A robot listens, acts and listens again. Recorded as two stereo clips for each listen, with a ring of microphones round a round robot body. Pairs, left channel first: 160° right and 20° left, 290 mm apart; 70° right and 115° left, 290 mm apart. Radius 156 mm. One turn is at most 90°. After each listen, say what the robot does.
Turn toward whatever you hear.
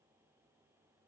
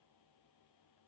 Keep listening.
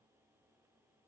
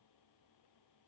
Keep listening.
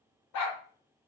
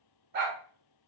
Turn 90° left.
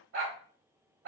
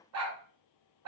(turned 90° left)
Turn 70° left.
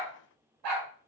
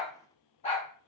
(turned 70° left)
Found it: a dog barking, straight ahead, under 1 m away.